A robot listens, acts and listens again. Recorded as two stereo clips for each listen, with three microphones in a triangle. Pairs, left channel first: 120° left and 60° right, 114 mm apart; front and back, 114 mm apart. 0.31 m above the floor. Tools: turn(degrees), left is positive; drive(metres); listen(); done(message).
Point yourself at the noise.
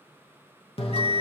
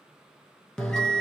turn(degrees=85)
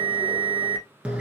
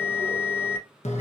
turn(degrees=20)
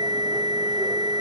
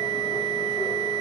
done("Found it: a bell, straight ahead.")